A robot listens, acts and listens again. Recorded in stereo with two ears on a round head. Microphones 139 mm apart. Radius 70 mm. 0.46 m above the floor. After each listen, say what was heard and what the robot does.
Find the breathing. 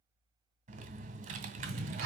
The breathing: about 70° right or 110° right. Turn 70° right.
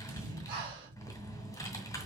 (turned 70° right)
So it is at 30° right. Turn 30° right.
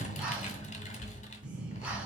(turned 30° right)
Found it: breathing, straight ahead, over 4 m away.